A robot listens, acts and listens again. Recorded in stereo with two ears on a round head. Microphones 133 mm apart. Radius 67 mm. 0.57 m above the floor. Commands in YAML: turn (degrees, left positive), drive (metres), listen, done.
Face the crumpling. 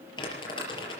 turn: 30
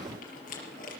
turn: 120
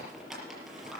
done: "Facing the crumpling, over 4 m away."